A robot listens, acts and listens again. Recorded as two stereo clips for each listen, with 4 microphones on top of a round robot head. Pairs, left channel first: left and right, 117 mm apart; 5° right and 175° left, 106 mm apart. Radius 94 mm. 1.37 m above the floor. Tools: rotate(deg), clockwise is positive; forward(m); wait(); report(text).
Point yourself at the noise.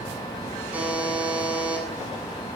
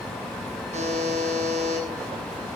rotate(170)
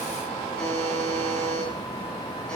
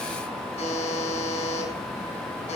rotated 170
report("Facing the buzzer, over 4 m away.")